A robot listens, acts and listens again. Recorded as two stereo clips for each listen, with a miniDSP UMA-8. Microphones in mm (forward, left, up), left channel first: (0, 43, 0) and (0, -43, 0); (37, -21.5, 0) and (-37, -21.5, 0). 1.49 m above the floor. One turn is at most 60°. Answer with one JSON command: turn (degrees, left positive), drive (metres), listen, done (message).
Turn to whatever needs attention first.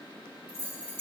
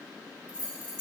{"listen": true}
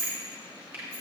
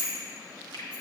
{"listen": true}
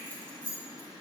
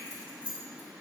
{"done": "I can't make out anything urgent, only keys jangling and a finger snap."}